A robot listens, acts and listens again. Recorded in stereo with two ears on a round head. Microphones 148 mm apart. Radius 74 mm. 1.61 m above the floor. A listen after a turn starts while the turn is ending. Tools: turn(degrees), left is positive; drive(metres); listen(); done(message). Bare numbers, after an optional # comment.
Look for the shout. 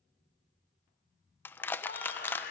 # The shout: about 60° left or 120° left.
turn(60)
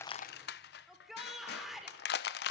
done("Found it: a shout, straight ahead.")